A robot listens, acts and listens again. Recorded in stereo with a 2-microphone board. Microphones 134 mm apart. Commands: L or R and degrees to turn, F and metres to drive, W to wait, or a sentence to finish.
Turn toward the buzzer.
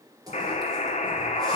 L55
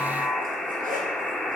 Found it: a buzzer, straight ahead, under 1 m away.